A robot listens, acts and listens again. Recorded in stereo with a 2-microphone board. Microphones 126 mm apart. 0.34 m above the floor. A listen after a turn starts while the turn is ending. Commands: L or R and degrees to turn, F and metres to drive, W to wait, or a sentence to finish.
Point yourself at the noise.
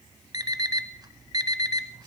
R30
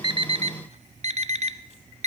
R120
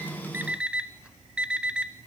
R10
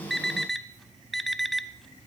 Found it: an alarm clock, straight ahead, under 1 m away.